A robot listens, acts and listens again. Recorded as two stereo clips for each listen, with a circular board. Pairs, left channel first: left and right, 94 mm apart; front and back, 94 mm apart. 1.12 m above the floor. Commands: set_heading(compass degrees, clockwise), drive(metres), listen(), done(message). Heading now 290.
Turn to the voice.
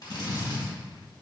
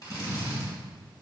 listen()
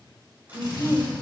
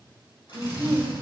set_heading(140)
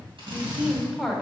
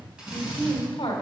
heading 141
done("Found it: a woman speaking, straight ahead, 1 to 2 m away.")